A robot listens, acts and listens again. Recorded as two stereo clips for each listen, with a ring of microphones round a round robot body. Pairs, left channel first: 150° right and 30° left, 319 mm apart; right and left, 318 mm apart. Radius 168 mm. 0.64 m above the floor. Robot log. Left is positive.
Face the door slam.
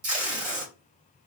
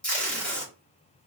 cmd idle
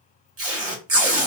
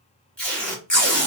cmd idle
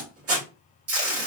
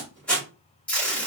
end: I can't make out a door slam, only tape being pulled.